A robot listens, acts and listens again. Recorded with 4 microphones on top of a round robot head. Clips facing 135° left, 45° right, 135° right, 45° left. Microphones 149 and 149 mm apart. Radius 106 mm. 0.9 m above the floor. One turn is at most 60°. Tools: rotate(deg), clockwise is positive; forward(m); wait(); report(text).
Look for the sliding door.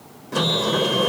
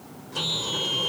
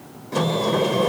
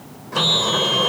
rotate(-60)
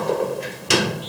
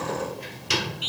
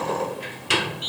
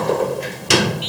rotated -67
rotate(-60)
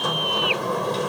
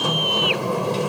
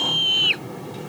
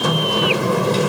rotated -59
rotate(-35)
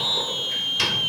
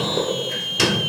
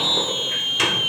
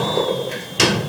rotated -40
report("Found it: a sliding door, straight ahead.")